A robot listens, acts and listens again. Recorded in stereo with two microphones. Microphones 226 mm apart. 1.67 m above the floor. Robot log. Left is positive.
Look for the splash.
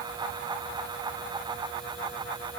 cmd idle
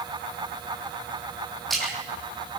cmd yaw +30
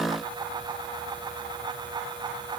cmd idle
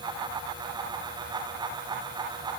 end: I heard a splash, but can't make it out now. It was about 30° right or 150° left.